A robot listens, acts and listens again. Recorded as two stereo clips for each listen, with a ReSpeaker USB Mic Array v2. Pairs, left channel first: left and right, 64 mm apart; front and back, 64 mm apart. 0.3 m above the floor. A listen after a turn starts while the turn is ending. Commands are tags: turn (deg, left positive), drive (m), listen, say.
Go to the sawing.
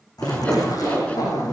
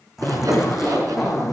<turn deg="160"/>
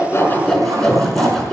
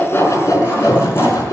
<turn deg="10"/>
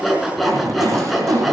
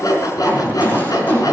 <drive m="1.0"/>
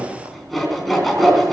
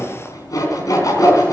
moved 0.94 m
<drive m="1.0"/>
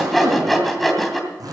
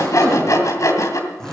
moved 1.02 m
<drive m="1.0"/>
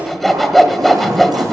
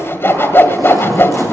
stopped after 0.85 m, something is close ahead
<say>Arrived at the sawing, straight ahead.</say>